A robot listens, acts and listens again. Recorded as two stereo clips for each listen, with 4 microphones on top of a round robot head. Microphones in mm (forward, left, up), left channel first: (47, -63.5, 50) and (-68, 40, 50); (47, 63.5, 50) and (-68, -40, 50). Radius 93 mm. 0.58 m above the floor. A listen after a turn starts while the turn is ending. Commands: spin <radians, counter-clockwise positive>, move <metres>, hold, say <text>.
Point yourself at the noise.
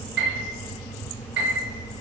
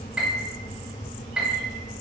spin 2.44
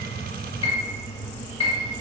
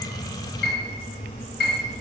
spin 0.26
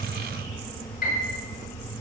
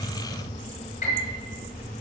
say Found it: a piano, straight ahead.